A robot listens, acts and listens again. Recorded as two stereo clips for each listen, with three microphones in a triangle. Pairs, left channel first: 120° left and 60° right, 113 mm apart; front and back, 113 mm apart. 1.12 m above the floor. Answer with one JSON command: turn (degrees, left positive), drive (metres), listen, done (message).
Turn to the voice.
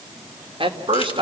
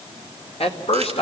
{"turn": -25}
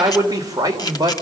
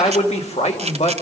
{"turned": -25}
{"done": "Found it: a man speaking, straight ahead, 2 to 4 m away."}